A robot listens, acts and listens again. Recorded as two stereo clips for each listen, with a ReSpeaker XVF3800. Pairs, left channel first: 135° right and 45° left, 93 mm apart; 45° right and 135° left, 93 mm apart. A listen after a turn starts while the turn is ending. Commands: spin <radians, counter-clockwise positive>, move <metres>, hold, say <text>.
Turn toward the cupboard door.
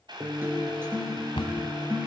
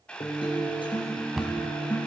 spin -2.44
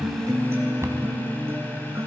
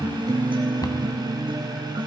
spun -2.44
spin -0.17
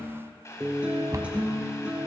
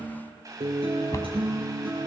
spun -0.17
say Facing the cupboard door.